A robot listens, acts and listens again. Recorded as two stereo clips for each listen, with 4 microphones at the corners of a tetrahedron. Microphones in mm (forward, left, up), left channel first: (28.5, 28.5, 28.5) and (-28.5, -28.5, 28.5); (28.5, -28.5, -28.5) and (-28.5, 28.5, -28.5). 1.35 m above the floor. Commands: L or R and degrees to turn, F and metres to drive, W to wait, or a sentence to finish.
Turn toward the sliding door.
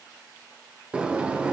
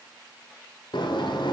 R60
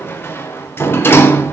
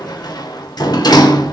R15
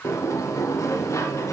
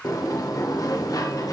Facing the sliding door.